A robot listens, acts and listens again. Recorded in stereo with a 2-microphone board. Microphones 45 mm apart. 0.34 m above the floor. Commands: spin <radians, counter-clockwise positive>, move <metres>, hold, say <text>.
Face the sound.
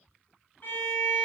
spin 0.87
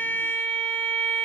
spin 1.22
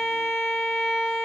say Facing the violin, 1 to 2 m away.